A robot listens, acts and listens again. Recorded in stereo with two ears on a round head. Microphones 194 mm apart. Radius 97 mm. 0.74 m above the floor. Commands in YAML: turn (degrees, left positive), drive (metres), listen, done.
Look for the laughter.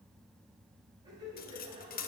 turn: -20
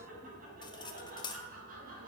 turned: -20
turn: -140
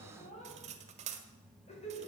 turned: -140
turn: 30
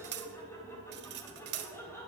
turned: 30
turn: 10
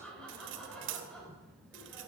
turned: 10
done: "Facing the laughter, 2 to 4 m away."